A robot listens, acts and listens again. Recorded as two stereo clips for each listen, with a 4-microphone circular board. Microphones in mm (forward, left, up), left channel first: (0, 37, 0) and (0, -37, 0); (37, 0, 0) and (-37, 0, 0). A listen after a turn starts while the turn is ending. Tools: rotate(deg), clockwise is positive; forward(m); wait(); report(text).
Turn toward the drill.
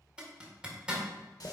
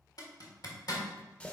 wait()
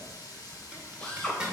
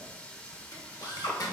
rotate(-15)
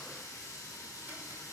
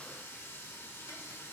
wait()
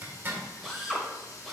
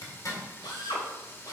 report("Found it: a drill, straight ahead.")